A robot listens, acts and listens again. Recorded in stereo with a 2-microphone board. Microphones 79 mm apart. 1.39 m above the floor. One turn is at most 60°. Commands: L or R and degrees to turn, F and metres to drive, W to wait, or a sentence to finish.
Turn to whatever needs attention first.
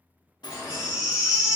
R15
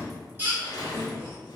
R60
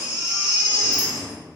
R60
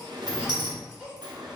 R15
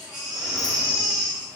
Found it: a baby crying, straight ahead.